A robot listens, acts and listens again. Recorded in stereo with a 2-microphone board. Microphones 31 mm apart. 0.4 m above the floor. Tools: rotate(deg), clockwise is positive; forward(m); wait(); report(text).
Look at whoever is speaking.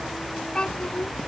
rotate(-25)
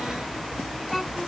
report("Facing the child speaking.")